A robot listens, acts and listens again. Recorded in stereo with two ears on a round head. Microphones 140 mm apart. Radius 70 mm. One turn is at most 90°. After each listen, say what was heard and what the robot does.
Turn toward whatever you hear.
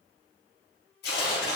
The tearing paper: about 70° left or 110° left. Turn 70° left.
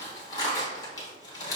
So it is at 25° left. Turn 25° left.
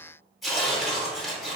Found it: tearing paper, straight ahead.